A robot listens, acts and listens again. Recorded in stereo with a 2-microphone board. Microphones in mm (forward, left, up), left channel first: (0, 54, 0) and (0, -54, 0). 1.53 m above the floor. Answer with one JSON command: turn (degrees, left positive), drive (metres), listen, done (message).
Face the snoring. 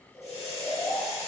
{"turn": 25}
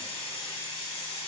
{"listen": true}
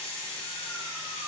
{"listen": true}
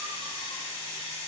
{"done": "I heard snoring, but can't make it out now. It was about straight ahead or 130° left."}